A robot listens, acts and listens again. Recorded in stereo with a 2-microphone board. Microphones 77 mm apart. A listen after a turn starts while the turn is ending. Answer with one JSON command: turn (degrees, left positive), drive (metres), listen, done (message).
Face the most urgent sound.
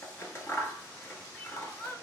{"turn": 25}
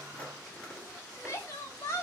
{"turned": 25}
{"turn": 130}
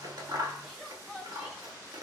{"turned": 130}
{"done": "Found it: crying, straight ahead, 1 to 2 m away."}